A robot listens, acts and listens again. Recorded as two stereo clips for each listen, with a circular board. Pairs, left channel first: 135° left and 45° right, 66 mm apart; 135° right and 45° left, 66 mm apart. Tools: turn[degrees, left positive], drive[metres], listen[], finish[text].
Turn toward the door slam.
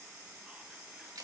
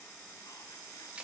Action: listen[]
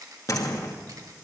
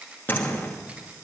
Thought: The door slam: 170° left.
Action: turn[170]
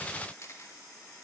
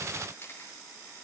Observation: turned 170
Action: finish[I heard a door slam from this way, but can't make it out now.]